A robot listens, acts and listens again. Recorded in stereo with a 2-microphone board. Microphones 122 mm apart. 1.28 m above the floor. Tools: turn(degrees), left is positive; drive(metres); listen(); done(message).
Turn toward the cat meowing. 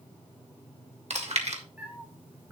turn(degrees=-30)
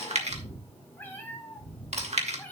turn(degrees=15)
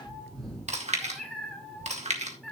done("Found it: a cat meowing, straight ahead, over 4 m away.")